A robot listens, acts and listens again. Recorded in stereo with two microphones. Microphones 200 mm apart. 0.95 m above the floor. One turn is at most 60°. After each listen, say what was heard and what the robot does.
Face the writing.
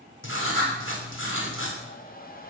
The writing: about 70° left or 110° left. Turn 60° left.
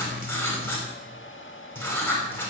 So it is at 10° left. Turn 10° left.
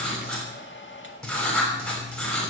Facing the writing, over 4 m away.